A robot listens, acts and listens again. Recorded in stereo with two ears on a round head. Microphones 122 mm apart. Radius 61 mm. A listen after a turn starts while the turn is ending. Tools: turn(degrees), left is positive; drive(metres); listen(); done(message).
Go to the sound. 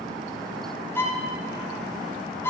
turn(degrees=15)
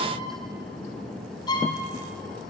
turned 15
turn(degrees=150)
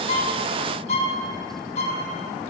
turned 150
turn(degrees=55)
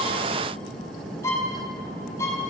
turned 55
turn(degrees=20)
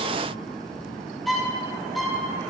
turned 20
drive(metres=1.0)
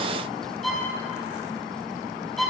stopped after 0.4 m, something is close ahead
done("Blocked. The violin is further on, straight ahead.")